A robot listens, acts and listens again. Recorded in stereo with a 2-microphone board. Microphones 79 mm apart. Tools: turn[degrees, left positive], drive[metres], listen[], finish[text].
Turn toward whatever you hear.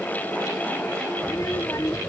Thought: The child speaking: about 40° left or 140° left.
Action: turn[40]
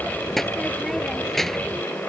Action: finish[Facing the child speaking.]